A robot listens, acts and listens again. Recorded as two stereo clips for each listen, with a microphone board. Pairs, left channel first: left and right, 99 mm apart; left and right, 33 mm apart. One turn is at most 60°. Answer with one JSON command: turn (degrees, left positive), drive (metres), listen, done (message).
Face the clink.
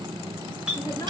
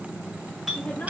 {"turn": -30}
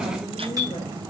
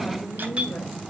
{"turn": -60}
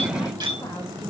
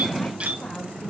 {"turn": -60}
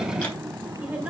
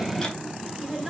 {"turn": -25}
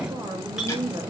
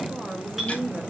{"listen": true}
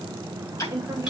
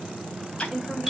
{"done": "I heard a clink from this way, but can't make it out now."}